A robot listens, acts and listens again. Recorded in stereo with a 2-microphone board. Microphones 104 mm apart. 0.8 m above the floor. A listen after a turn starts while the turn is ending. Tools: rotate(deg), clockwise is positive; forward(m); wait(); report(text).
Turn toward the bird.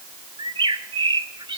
rotate(55)
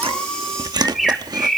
report("Facing the bird, 1 to 2 m away.")